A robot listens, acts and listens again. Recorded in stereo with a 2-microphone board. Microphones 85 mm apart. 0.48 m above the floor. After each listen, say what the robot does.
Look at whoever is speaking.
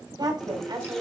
Turn 55° right.
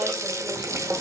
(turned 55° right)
Keep listening.
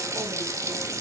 Keep listening.
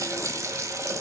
I heard a woman speaking, but can't make it out now. It was about straight ahead or 70° right.